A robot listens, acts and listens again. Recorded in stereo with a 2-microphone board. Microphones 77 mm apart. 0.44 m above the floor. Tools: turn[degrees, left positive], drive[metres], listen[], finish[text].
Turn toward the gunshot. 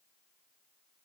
Action: listen[]
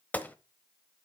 Thought: The gunshot: about 20° left or 160° left.
Action: turn[20]
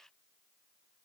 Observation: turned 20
Action: listen[]
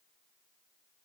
Action: finish[I heard a gunshot, but can't make it out now. It was about straight ahead or 140° left.]